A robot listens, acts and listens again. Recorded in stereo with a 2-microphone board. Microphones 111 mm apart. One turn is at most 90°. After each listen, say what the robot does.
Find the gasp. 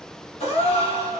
Turn 90° left.
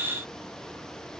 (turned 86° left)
Facing where the gasp came from. I can't hear it now.